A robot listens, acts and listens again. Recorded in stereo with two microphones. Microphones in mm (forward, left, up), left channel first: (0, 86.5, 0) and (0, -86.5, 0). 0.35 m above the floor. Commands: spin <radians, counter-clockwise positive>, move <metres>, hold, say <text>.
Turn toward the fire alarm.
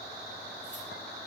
hold
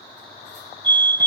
spin 0.52
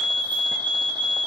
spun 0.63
spin -0.44
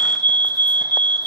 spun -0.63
spin 0.17
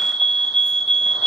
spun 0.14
say Found it: a fire alarm, straight ahead, over 4 m away.